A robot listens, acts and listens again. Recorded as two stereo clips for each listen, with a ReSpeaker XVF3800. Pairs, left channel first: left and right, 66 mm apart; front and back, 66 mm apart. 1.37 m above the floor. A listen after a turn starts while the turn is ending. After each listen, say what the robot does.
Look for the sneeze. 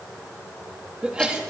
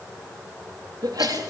Turn 165° right.
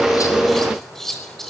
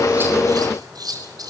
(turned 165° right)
Facing where the sneeze came from. I can't hear it now.